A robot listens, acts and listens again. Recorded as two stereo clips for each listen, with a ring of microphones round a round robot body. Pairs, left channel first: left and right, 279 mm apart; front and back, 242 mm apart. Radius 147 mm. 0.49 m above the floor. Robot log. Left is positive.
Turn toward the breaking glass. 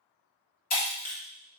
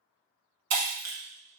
note: The breaking glass: 150° left.
cmd yaw +150
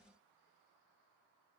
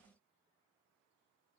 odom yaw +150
end: I heard breaking glass from this way, but can't make it out now.